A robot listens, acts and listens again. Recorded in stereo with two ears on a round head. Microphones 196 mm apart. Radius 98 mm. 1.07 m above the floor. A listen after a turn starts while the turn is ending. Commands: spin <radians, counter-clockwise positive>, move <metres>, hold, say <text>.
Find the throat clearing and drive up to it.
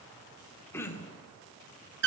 spin 0.52
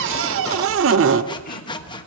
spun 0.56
hold
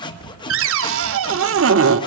hold
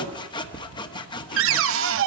say I heard throat clearing, but can't make it out now. It was about 20° right or 135° left. I did not reach it.